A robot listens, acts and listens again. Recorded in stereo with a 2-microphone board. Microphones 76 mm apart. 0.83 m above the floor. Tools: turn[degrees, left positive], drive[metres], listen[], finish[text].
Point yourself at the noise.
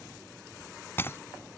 Thought: The breaking glass: about 30° left or 150° left.
Action: turn[30]
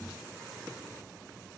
Action: listen[]
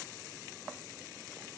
Action: finish[I heard breaking glass, but can't make it out now. It was about straight ahead or 120° left.]